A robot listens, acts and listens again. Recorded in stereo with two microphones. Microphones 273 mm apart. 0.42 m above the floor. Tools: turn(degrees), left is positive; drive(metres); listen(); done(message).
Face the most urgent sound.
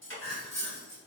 turn(degrees=65)
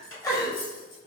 turn(degrees=15)
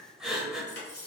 done("Found it: crying, straight ahead, under 1 m away.")